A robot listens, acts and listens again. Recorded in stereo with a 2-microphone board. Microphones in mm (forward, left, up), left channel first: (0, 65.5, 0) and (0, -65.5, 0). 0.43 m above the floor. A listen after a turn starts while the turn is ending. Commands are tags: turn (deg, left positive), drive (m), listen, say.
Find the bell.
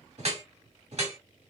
<listen/>
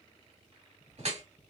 <listen/>
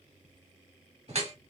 <say>I can't make out a bell to turn to.</say>